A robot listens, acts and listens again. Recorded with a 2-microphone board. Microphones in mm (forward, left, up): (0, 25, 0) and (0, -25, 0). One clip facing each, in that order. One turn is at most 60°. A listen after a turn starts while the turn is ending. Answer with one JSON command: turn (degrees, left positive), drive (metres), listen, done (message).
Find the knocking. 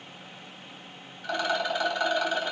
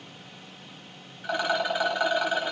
{"listen": true}
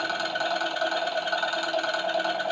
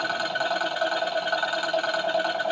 {"listen": true}
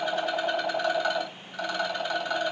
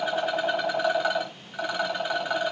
{"done": "I can't make out knocking, only a rattle."}